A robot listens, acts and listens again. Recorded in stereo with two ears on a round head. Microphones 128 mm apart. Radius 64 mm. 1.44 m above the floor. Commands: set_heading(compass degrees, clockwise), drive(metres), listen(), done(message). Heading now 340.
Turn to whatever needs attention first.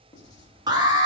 set_heading(10)
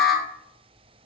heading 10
done("Found it: an alarm, straight ahead, 1 to 2 m away.")